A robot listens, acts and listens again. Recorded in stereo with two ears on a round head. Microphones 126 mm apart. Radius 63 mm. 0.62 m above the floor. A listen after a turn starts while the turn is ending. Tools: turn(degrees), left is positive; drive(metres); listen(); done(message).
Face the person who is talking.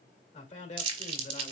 turn(degrees=50)
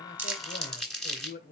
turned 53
turn(degrees=75)
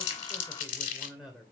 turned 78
done("Facing the man speaking.")